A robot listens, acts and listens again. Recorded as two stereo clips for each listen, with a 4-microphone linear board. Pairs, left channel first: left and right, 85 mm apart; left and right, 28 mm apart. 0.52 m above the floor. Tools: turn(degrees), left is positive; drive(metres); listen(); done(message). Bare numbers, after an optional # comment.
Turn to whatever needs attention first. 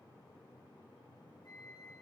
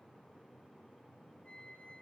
listen()
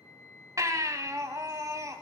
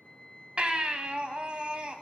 # The baby crying: about 40° right or 140° right.
turn(-40)
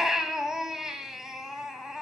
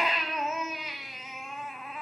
done("Facing the baby crying.")